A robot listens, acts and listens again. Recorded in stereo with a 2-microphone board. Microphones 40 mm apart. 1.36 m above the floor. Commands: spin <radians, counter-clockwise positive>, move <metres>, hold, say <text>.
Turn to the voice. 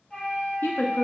spin 1.13
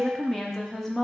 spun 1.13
spin 0.17
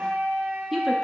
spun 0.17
say Found it: a woman speaking, straight ahead.